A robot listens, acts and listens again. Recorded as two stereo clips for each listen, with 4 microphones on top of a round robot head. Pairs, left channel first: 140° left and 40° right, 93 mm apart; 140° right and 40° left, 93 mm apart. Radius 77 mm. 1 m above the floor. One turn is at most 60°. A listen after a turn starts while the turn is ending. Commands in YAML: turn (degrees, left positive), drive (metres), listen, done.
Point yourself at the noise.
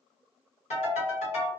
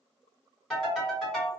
turn: 60
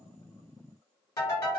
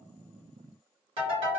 turn: 60
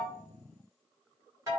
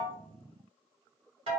turn: 15
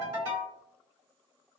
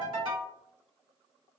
done: "Facing the ringtone, 1 to 2 m away."